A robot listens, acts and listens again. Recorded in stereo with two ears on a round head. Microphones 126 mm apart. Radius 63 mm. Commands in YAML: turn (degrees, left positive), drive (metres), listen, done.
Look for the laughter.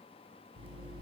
listen: true
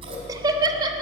turn: -30
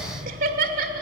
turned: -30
turn: -115
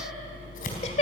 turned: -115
turn: 45
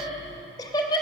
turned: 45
turn: 30
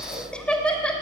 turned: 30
done: "Found it: laughter, straight ahead, 2 to 4 m away."